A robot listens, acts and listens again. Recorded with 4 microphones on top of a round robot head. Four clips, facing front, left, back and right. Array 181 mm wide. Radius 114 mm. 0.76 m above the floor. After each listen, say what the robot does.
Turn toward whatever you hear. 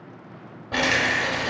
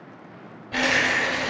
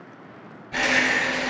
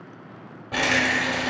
Turn 35° right.
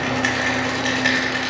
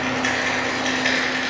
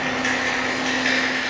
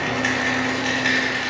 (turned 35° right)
Facing the rattle, under 1 m away.